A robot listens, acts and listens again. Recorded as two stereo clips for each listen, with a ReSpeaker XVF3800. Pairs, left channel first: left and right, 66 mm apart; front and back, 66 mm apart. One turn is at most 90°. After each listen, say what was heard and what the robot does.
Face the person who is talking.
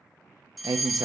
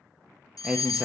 The man speaking: 100° right. Turn 90° right.
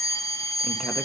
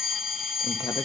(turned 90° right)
Nothing new. It was at 10° right. Turn 10° right.
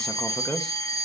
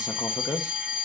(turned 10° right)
The man speaking is now 10° left. Turn 10° left.
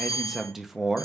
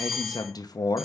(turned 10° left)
Found it: a man speaking, straight ahead.